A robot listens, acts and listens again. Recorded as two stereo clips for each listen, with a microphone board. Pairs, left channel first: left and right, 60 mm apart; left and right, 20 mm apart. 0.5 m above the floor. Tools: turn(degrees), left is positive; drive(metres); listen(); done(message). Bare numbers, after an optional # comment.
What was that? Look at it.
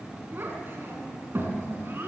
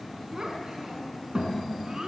# The child speaking: about 40° right or 140° right.
turn(-40)
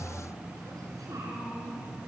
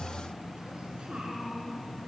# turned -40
listen()
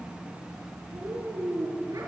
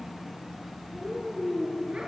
# So it is at 100° right.
turn(-100)
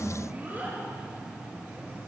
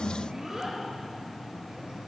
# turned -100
# The child speaking is now 30° right.
turn(-30)
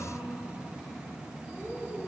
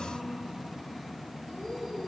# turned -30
listen()
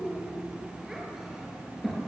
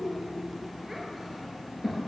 done("Facing the child speaking.")